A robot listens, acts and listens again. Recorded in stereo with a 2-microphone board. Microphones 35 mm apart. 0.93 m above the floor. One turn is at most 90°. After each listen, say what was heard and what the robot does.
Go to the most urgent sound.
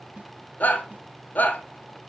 The shout: about 55° left or 125° left. Turn 55° left.
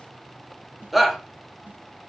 Drive 1.0 m forward.
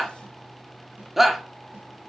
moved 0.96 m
Drive 1.0 m forward.
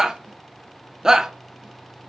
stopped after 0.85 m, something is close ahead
The shout is now 15° right. Turn 15° right.
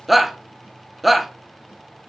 I am next to the shout.